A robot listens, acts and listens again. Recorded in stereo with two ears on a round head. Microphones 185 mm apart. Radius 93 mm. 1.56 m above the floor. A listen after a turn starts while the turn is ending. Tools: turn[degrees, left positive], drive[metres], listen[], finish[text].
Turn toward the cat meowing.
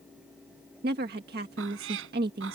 Thought: The cat meowing: about 70° right or 110° right.
Action: turn[-70]
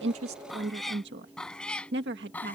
Thought: So it is at 10° left.
Action: turn[10]
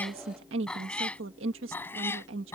Thought: The cat meowing is now 10° left.
Action: turn[10]
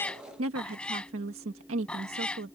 Action: finish[Found it: a cat meowing, straight ahead.]